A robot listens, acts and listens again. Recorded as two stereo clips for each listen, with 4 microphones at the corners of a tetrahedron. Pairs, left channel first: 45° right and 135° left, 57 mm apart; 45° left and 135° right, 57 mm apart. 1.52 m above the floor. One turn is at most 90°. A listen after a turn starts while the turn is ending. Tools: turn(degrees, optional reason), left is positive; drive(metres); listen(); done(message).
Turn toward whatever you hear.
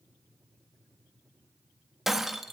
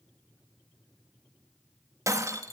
turn(degrees=-90, reason="The breaking glass: 140° right.")
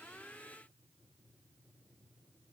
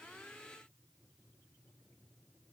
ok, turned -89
turn(degrees=-50, reason="Nothing new. It was at 50° right.")
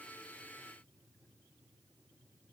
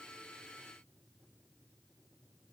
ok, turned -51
done("Facing where the breaking glass came from. I can't hear it now.")